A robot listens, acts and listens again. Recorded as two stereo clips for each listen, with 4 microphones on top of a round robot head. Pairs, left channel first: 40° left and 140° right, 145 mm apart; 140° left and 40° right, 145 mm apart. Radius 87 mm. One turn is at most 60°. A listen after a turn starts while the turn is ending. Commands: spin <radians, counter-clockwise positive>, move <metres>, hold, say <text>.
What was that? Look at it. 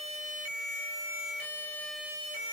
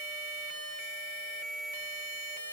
hold
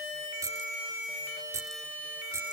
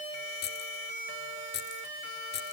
spin 1.05
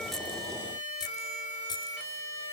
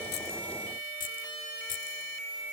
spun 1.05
spin 1.05
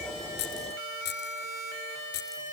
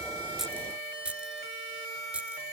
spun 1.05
spin 0.70
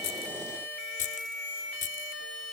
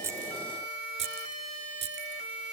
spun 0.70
say Facing the keys jangling.